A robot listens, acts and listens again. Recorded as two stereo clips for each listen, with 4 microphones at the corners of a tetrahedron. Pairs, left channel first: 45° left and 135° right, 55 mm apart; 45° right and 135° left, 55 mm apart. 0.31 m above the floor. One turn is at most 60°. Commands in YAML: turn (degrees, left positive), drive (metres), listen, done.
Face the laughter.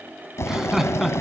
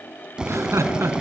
turn: 60
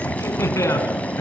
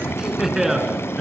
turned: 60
turn: 50
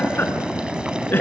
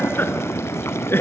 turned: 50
done: "Facing the laughter, 2 to 4 m away."